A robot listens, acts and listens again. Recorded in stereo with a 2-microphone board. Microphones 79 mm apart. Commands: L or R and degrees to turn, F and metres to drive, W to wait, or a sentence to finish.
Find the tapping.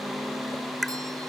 L30
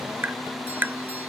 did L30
R25
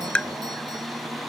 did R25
L15
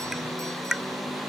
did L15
Facing the tapping.